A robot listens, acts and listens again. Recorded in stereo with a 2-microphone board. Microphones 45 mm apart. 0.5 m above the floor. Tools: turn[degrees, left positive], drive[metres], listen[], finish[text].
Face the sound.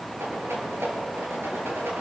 Action: turn[-90]
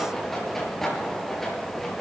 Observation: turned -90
Action: finish[Found it: a rattle, straight ahead, over 4 m away.]